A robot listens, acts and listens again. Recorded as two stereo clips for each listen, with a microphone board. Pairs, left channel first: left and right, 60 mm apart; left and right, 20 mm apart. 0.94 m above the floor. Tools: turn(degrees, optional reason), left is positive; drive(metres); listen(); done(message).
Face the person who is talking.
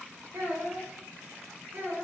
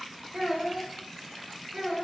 turn(degrees=-45, reason="The child speaking: about 45° right or 135° right.")
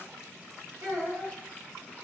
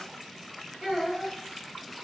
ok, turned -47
turn(degrees=-90, reason="So it is at 90° right.")
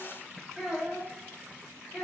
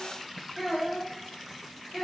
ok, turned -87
done("Found it: a child speaking, straight ahead, 1 to 2 m away.")